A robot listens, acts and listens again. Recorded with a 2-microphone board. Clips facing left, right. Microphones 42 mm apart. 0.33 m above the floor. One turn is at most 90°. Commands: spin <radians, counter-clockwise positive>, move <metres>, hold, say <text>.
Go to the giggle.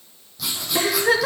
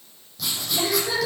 spin 1.05
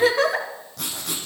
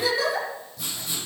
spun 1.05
spin 0.96
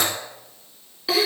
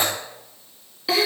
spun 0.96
move 1.0
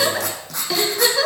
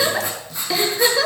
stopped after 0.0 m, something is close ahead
say Something is in my way. I am facing the giggle but have not reached it.